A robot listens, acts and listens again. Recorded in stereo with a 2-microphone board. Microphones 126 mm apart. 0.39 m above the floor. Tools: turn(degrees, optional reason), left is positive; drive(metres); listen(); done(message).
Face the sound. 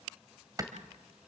turn(degrees=-30, reason="The clap: about 30° right or 150° right.")
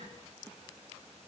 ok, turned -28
listen()
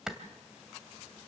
done("Found it: a clap, straight ahead, 2 to 4 m away.")